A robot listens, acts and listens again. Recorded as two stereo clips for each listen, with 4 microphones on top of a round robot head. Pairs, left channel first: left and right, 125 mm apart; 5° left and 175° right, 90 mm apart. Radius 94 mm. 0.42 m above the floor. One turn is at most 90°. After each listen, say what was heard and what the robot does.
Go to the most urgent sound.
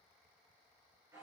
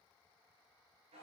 Keep listening.
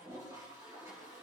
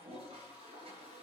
Keep listening.
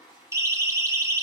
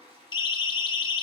The siren: 25° right. Turn 25° right.
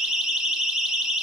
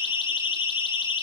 Drive 1.0 m forward.
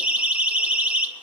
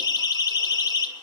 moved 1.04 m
The siren is now 15° right. Turn 15° right.
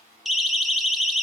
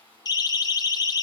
Drive 1.0 m forward.
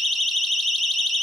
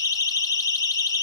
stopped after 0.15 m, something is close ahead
Arrived at the siren, straight ahead.